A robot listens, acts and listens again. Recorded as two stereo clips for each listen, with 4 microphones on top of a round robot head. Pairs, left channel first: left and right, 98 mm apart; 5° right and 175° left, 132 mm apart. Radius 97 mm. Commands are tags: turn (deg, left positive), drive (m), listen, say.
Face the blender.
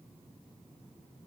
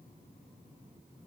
<listen/>
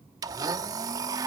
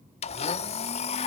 <turn deg="-40"/>
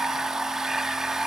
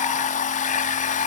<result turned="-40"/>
<say>Found it: a blender, straight ahead.</say>